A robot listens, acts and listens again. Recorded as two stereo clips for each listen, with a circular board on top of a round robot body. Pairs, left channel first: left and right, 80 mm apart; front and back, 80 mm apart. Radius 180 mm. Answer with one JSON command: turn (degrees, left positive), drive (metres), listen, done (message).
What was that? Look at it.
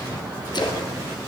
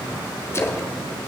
{"turn": 55}
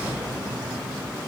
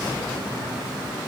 {"done": "Facing where the splash came from. I can't hear it now."}